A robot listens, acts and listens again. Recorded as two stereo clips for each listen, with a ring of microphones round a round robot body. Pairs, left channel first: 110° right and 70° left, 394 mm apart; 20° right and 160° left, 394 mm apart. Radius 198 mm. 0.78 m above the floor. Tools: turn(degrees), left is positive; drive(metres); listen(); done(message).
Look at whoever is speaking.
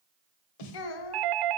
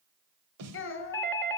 turn(degrees=-80)
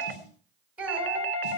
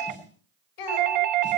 turn(degrees=-20)
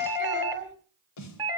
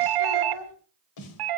done("Facing the child speaking, 2 to 4 m away.")